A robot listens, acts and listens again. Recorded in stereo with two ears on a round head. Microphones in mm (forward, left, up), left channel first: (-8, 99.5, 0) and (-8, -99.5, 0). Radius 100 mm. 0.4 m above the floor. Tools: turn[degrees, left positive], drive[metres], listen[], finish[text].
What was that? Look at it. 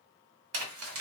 Thought: The crumpling: about 75° right or 105° right.
Action: turn[-75]
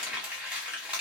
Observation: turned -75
Action: finish[Facing the crumpling.]